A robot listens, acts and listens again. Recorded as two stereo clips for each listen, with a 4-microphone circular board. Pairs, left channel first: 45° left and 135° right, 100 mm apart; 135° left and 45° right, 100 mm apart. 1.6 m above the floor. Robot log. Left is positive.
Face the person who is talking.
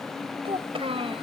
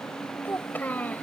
note: The child speaking: 150° right.
cmd yaw -150
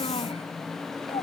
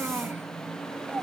cmd idle
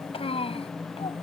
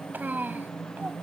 note: The child speaking is now 25° left.
cmd yaw +25
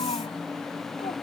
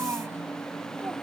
note: The child speaking is now 20° left.
cmd yaw +20
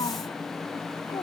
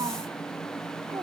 cmd idle
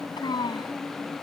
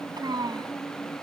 end: Facing the child speaking.